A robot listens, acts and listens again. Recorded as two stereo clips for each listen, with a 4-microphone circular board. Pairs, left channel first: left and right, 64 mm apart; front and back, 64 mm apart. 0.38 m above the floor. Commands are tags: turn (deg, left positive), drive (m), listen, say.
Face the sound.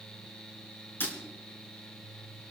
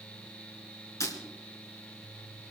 <turn deg="35"/>
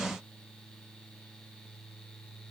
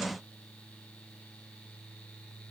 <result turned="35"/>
<say>Facing where the breaking glass came from. I can't hear it now.</say>